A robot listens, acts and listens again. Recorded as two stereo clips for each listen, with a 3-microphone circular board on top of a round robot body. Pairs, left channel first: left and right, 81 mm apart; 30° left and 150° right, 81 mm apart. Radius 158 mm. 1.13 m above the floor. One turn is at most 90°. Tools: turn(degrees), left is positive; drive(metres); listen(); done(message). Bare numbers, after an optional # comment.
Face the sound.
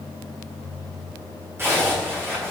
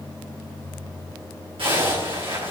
# The zipper: 150° right.
turn(-90)
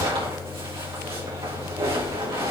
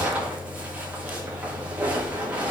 # The zipper is now 75° right.
turn(-75)
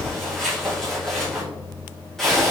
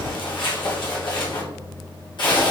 done("Found it: a zipper, straight ahead, 2 to 4 m away.")